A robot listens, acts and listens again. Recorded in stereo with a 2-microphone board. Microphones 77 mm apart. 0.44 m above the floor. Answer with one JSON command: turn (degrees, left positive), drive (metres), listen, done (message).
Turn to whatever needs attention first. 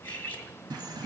{"listen": true}
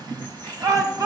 {"turn": -45}
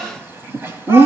{"listen": true}
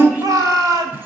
{"turn": -75}
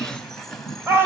{"turn": -40}
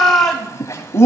{"done": "Facing the shout."}